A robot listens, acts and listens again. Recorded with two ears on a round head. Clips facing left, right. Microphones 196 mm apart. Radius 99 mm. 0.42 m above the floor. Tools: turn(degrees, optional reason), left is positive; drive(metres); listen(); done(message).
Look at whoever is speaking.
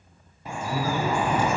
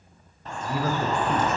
turn(degrees=-45, reason="The man speaking: about 45° right or 135° right.")
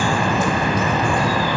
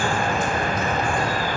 listen()
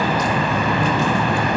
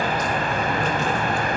listen()
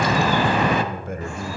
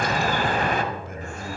turn(degrees=45, reason="So it is at 45° left.")
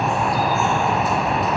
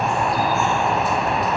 listen()
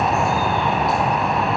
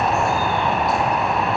listen()
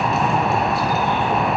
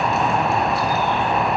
done("Facing where the man speaking came from. I can't hear it now.")